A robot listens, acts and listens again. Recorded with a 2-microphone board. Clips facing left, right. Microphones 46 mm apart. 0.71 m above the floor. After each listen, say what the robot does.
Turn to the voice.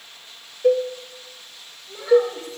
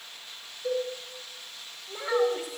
Turn 15° right.
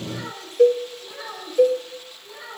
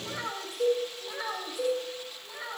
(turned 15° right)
Turn 30° right.
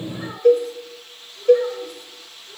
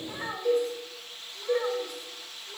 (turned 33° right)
Turn 145° right.
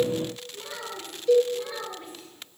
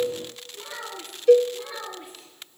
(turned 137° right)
Turn 10° right.
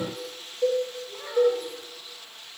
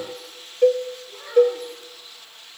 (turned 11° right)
Facing the child speaking, over 4 m away.